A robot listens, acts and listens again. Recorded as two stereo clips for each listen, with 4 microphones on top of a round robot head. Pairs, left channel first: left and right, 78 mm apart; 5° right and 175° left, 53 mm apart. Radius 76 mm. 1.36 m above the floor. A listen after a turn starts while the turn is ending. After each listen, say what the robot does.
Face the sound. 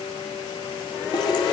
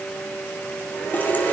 Turn 50° left.
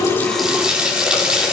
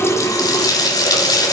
Turn 10° right.
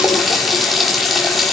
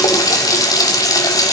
Facing the running tap.